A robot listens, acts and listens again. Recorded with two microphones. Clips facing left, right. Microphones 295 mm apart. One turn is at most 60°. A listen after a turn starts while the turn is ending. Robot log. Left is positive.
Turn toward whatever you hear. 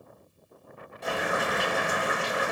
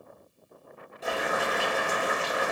cmd yaw +30
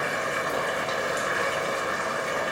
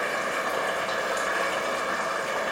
note: So it is at 155° left.
cmd yaw +60
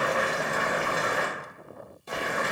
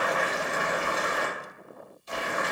note: The boiling is now 105° left.
cmd yaw +60
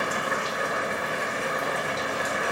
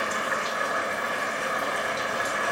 note: The boiling is now 35° left.
cmd yaw +35
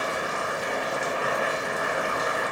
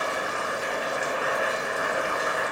end: Found it: boiling, straight ahead, under 1 m away.